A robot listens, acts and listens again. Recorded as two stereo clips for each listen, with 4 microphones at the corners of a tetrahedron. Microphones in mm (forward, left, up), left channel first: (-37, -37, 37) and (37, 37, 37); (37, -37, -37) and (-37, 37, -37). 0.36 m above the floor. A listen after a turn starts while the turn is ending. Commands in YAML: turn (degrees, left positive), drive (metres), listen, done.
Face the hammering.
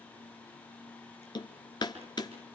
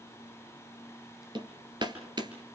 turn: 180
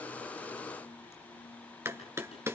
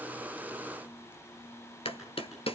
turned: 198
turn: -20
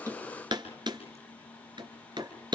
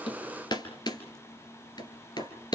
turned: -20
done: "Facing the hammering, 2 to 4 m away."